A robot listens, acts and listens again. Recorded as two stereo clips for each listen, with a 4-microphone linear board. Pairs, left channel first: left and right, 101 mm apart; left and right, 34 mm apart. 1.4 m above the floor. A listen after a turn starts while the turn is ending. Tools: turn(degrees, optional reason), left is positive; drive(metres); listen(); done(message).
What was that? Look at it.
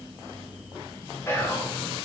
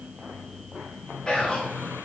turn(degrees=25, reason="The whispering: about 25° left or 155° left.")
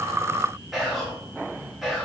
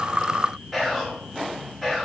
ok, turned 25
done("Facing the whispering.")